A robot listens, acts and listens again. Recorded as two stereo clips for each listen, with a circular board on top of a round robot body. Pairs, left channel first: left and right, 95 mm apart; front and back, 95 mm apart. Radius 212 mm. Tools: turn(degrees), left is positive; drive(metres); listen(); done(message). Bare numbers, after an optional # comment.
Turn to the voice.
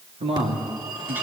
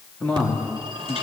# The man speaking: 75° right.
turn(-75)
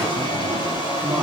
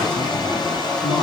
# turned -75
listen()
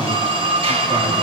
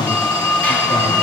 # The man speaking is now 10° right.
turn(-10)
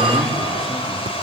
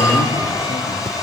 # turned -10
listen()
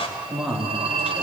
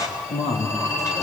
done("Found it: a man speaking, straight ahead.")